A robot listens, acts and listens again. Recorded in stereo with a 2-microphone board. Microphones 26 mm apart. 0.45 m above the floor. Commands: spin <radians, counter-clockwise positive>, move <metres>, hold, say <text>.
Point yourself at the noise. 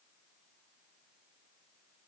hold
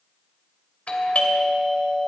spin 0.96
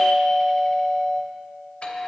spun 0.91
spin 0.96
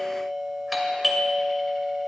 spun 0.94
say Found it: a doorbell, straight ahead, 2 to 4 m away.